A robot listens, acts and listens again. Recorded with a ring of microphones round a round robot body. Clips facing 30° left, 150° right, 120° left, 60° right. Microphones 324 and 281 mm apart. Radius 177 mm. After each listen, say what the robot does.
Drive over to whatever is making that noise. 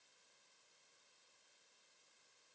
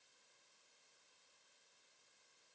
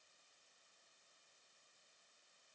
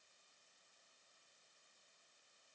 Keep listening.
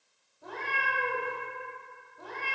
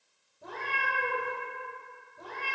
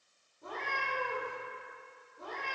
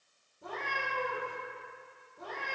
Turn 100° right.
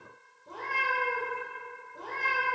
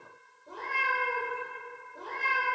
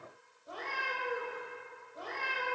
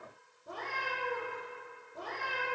Turn 20° right.
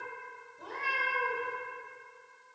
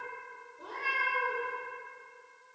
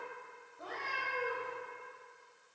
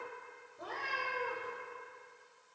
Drive 1.0 m forward.
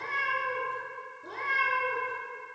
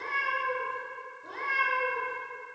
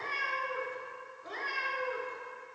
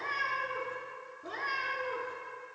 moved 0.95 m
Turn 20° right.
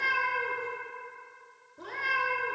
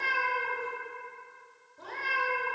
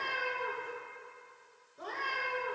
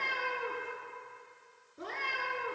Drive 1.0 m forward.
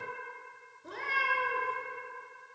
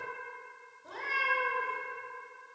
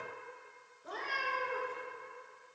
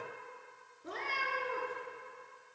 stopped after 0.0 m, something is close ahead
I am next to the cat meowing.